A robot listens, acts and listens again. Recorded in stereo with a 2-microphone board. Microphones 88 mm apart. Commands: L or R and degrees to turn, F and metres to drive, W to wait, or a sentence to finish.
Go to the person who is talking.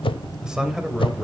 R30
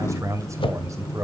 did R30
R140
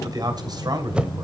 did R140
R55
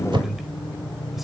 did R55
F1.0
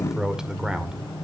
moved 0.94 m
R10
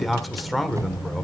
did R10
F1.0
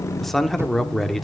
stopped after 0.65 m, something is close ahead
I am next to the man speaking.